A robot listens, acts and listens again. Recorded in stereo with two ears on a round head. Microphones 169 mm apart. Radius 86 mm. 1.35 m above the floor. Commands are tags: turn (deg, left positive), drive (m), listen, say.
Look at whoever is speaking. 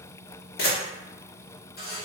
<listen/>
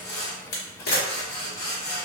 <listen/>
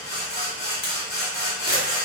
<say>I can't make out anyone speaking, only a camera shutter and sawing.</say>